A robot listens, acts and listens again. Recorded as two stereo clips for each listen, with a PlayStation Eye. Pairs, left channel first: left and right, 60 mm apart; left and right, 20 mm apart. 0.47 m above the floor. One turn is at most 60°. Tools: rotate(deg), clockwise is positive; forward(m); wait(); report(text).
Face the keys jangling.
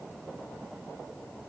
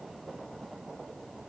wait()
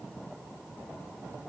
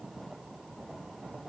wait()
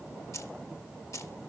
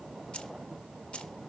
rotate(-55)
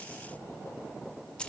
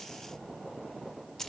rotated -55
rotate(-20)
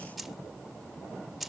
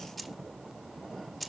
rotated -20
report("Found it: keys jangling, straight ahead, under 1 m away.")